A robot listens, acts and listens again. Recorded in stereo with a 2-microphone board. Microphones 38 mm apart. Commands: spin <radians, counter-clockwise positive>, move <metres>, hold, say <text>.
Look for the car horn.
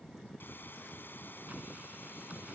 hold
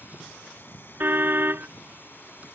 spin -1.57
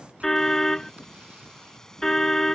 spin 0.17
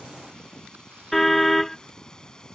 say Facing the car horn.